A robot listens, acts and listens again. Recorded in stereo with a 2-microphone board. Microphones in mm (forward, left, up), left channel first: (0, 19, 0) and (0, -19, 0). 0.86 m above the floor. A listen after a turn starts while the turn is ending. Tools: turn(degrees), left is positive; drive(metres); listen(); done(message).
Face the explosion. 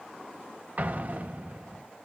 turn(degrees=-45)
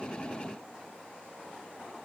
listen()
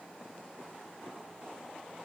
done("I heard an explosion, but can't make it out now. It was about straight ahead or 90° right.")